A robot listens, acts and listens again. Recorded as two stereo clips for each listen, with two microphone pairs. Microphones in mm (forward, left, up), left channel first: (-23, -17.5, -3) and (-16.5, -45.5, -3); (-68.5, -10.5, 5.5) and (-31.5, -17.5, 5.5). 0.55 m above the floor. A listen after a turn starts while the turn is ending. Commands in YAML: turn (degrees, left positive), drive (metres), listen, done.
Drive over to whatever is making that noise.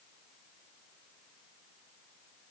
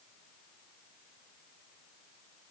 listen: true
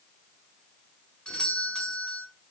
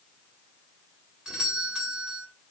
turn: 55
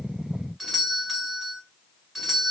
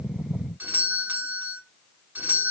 drive: 1.0
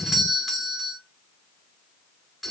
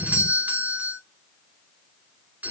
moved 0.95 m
turn: 10
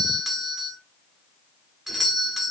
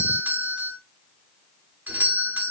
drive: 1.0
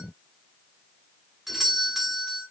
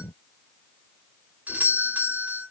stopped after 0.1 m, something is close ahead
done: "I am next to the doorbell."